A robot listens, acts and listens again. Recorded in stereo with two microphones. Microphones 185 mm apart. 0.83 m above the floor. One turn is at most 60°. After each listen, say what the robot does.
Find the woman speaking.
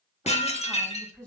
Turn 20° right.
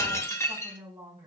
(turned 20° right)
Turn 60° right.
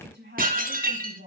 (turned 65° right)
Turn 60° right.
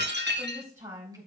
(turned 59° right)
Turn 15° right.
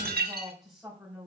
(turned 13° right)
Found it: a woman speaking, straight ahead.